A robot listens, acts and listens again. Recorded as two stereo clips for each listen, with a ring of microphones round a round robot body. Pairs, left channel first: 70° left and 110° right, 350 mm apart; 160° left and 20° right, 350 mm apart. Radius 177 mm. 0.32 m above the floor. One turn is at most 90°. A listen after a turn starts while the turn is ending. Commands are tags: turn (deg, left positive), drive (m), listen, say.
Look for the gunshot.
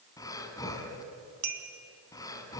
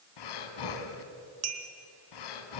<listen/>
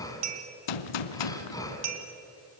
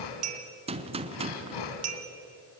<turn deg="50"/>
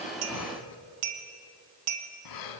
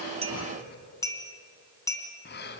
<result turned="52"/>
<say>I heard a gunshot from this way, but can't make it out now.</say>